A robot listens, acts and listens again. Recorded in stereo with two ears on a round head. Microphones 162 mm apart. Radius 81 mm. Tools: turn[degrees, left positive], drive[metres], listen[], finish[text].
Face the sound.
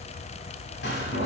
Thought: The door slam: about 65° left or 115° left.
Action: turn[65]
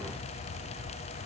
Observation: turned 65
Action: listen[]
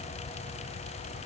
Action: finish[I heard a door slam, but can't make it out now. It was about straight ahead or 50° left.]